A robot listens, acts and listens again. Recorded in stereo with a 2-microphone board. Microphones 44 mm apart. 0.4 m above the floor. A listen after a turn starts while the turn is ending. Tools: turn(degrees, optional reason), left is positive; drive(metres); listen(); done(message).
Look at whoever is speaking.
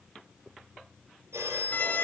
listen()
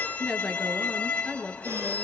turn(degrees=-30)
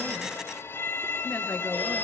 listen()
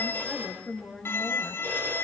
turn(degrees=20, reason="So it is at 20° left.")
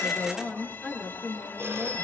done("Facing the woman speaking.")